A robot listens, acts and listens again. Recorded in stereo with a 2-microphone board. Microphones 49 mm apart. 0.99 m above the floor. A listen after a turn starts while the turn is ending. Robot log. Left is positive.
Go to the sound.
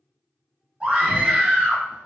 note: The scream: about 20° right or 160° right.
cmd yaw -20
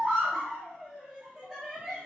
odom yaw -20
cmd fwd 1.0
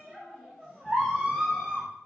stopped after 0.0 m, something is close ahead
end: Blocked. The scream is further on, straight ahead.